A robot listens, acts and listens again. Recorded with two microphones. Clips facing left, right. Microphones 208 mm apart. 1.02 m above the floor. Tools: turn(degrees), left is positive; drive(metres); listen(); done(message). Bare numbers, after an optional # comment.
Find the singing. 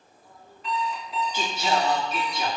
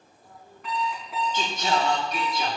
turn(30)
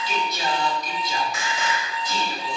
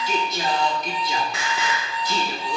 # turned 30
# So it is at 70° right.
turn(-70)
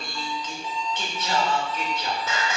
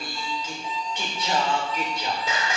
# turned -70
# The singing is now 15° right.
turn(-15)
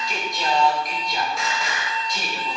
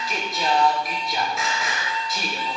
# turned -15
done("Found it: singing, straight ahead.")